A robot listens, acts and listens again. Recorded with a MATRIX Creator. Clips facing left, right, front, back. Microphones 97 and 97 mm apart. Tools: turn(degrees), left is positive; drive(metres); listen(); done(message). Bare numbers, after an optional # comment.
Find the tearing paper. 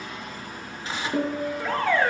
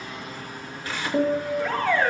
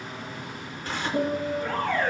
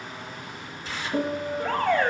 # The tearing paper: 25° left.
turn(25)
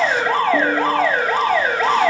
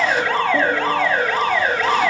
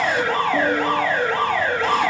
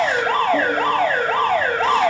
listen()
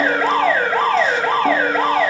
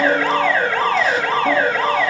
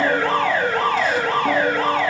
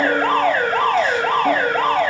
listen()
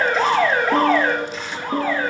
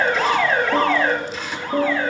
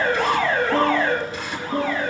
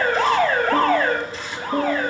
done("Found it: tearing paper, straight ahead.")